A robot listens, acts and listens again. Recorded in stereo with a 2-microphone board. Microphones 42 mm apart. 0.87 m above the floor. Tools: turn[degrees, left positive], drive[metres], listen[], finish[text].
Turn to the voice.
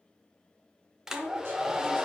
Thought: The woman speaking: about 65° right or 115° right.
Action: turn[-65]
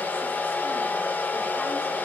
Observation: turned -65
Action: listen[]
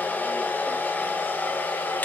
Action: listen[]
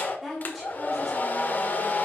Action: finish[Found it: a woman speaking, straight ahead.]